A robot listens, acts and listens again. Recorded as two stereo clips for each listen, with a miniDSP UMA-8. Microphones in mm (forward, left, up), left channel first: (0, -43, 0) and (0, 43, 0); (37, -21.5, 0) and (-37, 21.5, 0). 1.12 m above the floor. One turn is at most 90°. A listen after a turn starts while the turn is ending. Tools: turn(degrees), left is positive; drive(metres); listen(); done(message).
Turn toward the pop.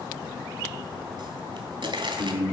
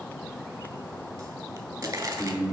turn(degrees=90)
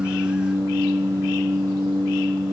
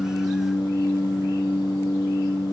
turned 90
turn(degrees=25)
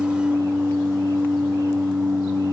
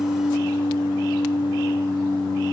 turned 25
done("Facing where the pop came from. I can't hear it now.")